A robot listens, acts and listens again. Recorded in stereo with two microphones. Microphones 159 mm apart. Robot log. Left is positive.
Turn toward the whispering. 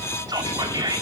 note: The whispering: about 25° right or 155° right.
cmd yaw -25
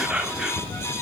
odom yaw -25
end: Facing the whispering, 1 to 2 m away.